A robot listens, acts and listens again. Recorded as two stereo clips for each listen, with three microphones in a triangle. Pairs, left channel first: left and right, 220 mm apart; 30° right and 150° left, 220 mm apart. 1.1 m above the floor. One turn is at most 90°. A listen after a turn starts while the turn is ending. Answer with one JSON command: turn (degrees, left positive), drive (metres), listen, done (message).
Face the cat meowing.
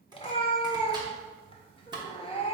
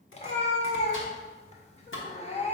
{"turn": 25}
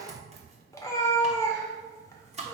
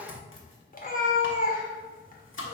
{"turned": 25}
{"turn": 15}
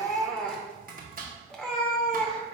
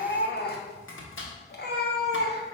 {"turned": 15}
{"done": "Facing the cat meowing."}